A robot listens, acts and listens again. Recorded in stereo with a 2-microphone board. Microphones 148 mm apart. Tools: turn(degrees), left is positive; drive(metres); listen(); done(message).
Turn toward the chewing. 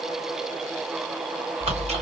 turn(degrees=-50)
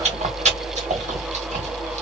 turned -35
turn(degrees=-80)
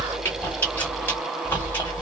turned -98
turn(degrees=20)
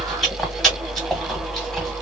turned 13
done("Found it: chewing, straight ahead.")